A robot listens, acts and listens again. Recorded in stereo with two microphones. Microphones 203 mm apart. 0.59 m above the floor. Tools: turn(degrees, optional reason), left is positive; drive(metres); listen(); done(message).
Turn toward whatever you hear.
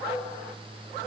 listen()
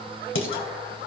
turn(degrees=90)
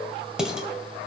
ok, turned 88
done("Facing the dishes clattering, 1 to 2 m away.")